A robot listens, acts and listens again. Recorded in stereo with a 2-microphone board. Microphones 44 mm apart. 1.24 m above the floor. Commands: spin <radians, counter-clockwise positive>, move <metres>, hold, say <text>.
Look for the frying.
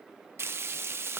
spin -1.13
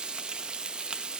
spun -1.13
spin -0.35
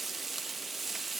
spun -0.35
say Found it: frying, straight ahead, under 1 m away.